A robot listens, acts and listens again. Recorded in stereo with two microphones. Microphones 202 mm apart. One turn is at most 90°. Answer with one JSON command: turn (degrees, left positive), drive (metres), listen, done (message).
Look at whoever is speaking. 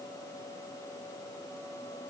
{"listen": true}
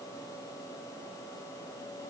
{"listen": true}
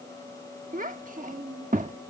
{"turn": -40}
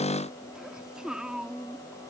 {"done": "Facing the child speaking."}